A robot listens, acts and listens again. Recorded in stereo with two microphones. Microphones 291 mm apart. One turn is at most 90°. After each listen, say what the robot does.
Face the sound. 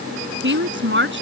Turn 40° right.
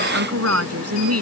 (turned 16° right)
Turn 90° right.
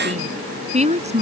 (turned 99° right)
Turn 25° right.
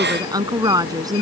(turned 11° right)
Turn 15° right.
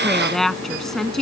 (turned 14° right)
Found it: a woman speaking, straight ahead.